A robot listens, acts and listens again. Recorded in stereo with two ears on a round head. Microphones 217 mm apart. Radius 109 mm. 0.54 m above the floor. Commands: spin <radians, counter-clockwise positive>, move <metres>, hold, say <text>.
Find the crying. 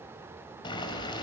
hold
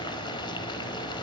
hold
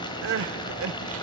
spin -1.05
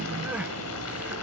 hold
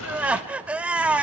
say Facing the crying, under 1 m away.